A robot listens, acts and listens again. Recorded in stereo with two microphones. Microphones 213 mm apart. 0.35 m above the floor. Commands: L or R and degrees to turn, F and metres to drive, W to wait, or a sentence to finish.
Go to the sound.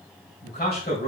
L40
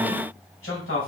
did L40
L95
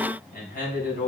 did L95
L45
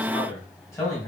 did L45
L15
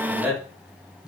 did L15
F1.0
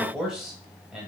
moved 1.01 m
F1.0
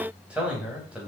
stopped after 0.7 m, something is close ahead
R10
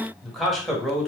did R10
I am next to the man speaking.